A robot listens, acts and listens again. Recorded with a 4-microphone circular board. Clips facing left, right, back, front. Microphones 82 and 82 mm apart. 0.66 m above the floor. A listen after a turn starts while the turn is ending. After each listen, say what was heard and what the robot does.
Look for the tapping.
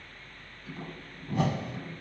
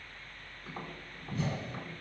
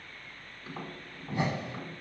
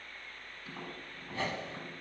The tapping: 125° right. Turn 125° right.
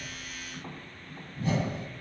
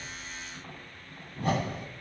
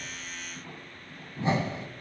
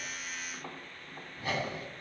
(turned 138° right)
The tapping is now 15° left. Turn 15° left.
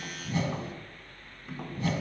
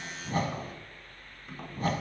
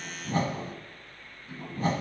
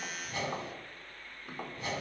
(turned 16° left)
Facing the tapping.